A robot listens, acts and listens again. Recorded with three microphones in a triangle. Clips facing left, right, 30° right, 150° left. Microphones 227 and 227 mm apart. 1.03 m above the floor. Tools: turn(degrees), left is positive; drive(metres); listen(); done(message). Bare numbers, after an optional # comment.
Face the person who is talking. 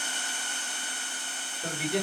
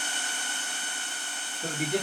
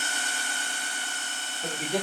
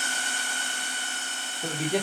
# The man speaking: 130° right.
turn(-130)
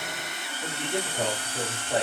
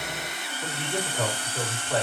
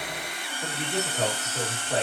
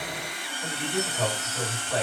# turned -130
# The man speaking is now 15° left.
turn(15)
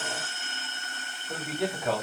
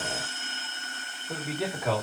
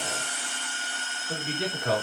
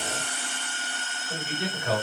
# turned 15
done("Facing the man speaking, 1 to 2 m away.")